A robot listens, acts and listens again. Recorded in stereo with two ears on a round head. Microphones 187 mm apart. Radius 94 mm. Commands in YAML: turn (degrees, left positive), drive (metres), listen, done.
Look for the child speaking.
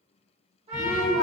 turn: 40
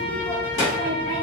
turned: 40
turn: 95
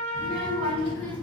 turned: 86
turn: 10
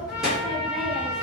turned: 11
done: "Facing the child speaking, 1 to 2 m away."